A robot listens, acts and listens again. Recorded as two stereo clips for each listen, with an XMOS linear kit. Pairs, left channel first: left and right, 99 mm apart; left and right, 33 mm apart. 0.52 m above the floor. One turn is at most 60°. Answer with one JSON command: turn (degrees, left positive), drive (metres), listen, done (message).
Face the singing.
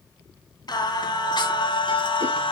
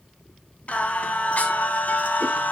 {"turn": 60}
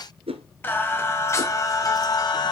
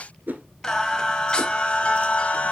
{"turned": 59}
{"turn": 45}
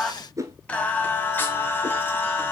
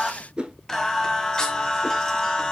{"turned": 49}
{"turn": 20}
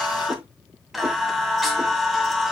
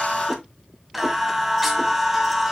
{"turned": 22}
{"done": "Found it: singing, straight ahead."}